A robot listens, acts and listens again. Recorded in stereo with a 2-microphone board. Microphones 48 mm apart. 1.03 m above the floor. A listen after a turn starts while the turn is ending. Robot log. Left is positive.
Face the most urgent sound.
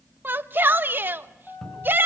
note: The shout: about 45° right or 135° right.
cmd yaw -45
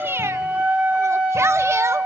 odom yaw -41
cmd idle
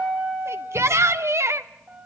note: So it is at 90° right.
cmd yaw -90
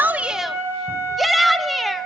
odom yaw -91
end: Facing the shout.